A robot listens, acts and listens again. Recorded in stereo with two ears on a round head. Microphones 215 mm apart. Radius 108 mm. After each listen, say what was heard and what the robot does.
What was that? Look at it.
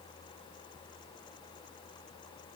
Keep listening.
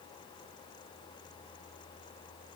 Keep listening.
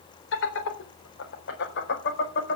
The laughter: about 45° left or 135° left. Turn 45° left.
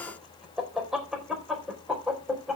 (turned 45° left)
Facing the laughter.